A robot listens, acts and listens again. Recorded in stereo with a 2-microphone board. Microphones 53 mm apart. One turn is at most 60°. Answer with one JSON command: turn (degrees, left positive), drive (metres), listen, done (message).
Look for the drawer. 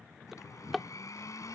{"turn": 30}
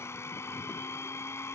{"listen": true}
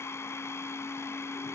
{"listen": true}
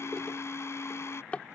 {"turn": 60}
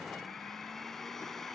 {"turn": 60}
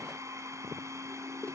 {"turn": 30}
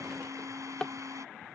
{"turn": 20}
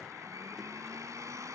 {"listen": true}
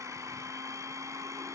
{"listen": true}
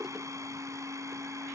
{"done": "I heard a drawer from this way, but can't make it out now."}